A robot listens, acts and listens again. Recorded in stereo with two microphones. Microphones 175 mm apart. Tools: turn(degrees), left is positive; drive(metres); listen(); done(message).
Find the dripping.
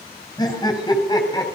listen()
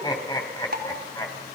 turn(degrees=-70)
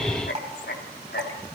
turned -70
turn(degrees=-40)
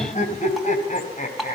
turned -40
done("Facing the dripping, over 4 m away.")